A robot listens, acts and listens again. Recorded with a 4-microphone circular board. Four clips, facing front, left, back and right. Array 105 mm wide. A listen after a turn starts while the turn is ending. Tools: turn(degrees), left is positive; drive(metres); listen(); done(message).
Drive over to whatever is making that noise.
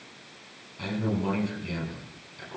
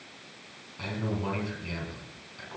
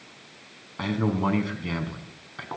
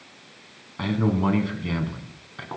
turn(degrees=-145)
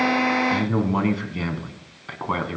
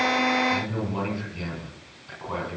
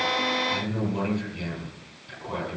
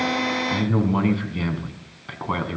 turn(degrees=-30)
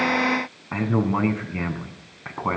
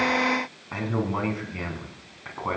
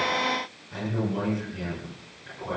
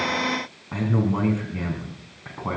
drive(metres=1.0)
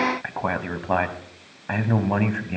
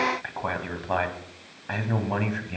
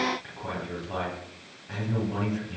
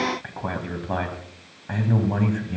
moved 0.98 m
turn(degrees=10)
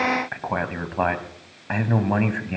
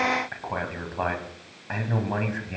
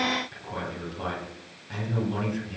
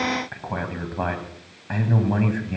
drive(metres=1.0)
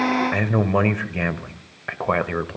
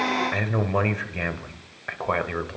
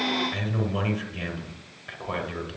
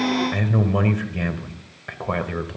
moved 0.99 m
turn(degrees=10)
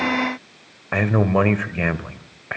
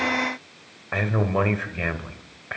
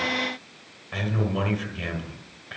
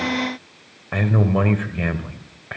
drive(metres=1.0)
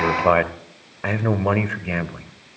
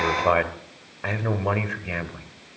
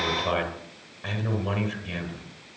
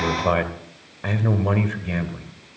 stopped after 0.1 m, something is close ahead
turn(degrees=10)
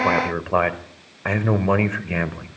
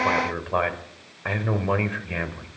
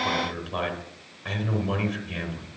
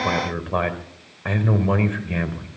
done("I am next to the man speaking.")